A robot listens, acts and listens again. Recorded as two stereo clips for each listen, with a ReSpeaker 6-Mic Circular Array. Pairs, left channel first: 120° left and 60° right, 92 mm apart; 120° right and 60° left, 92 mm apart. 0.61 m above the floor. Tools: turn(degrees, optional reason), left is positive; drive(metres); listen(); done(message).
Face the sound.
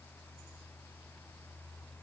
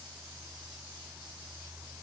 listen()
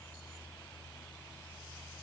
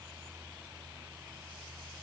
listen()
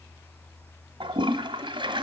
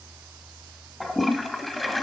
turn(degrees=-30, reason="The toilet flushing: 30° right.")
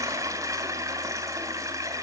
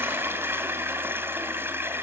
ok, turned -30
done("Facing the toilet flushing, 1 to 2 m away.")